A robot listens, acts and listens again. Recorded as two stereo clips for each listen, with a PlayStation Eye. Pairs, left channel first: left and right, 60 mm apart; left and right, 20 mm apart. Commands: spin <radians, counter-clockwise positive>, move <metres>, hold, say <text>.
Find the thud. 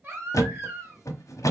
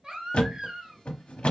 spin 1.13
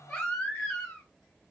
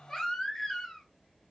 hold
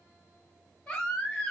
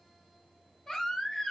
say I heard a thud, but can't make it out now. It was about straight ahead or 50° left.